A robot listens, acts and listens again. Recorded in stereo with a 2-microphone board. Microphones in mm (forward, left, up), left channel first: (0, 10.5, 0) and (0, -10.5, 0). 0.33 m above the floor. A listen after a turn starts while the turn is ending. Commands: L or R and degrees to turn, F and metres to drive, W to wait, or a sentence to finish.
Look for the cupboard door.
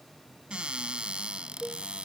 R70
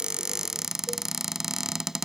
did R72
R30
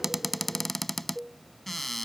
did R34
Found it: a cupboard door, straight ahead.